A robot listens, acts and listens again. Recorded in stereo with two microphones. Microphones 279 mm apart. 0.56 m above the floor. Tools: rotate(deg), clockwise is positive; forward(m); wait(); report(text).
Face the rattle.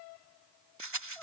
rotate(90)
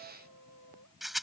report("Found it: a rattle, straight ahead.")